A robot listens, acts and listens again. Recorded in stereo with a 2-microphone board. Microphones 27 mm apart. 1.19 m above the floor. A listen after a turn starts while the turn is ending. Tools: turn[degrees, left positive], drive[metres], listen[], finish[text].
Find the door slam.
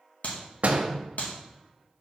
Thought: The door slam: about 60° right or 120° right.
Action: turn[-60]
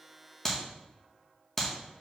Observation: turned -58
Action: listen[]
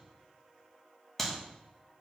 Action: finish[I heard a door slam, but can't make it out now. It was about straight ahead or 65° right.]